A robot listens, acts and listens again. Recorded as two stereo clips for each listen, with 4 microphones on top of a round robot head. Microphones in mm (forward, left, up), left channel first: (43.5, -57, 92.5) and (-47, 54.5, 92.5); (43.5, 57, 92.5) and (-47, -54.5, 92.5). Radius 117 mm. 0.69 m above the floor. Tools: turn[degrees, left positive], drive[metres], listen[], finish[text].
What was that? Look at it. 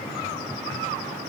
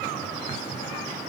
Action: listen[]
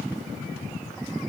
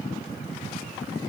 Action: listen[]
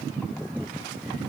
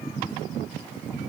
Action: finish[I can't make out anything.]